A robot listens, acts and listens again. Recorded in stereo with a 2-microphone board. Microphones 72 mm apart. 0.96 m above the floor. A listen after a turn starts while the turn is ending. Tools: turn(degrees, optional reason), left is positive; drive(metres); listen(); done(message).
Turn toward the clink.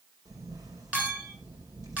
turn(degrees=-20, reason="The clink: about 20° right or 160° right.")
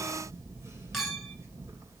done("Facing the clink, 2 to 4 m away.")